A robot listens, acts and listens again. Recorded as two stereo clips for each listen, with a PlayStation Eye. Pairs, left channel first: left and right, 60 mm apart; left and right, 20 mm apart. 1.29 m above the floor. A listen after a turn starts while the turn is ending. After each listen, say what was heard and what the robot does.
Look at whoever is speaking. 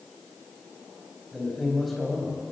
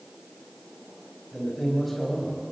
Turn 30° left.
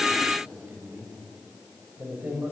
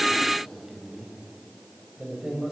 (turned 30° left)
So it is at 35° right. Turn 35° right.
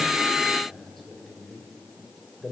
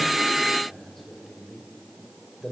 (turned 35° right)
Facing the man speaking.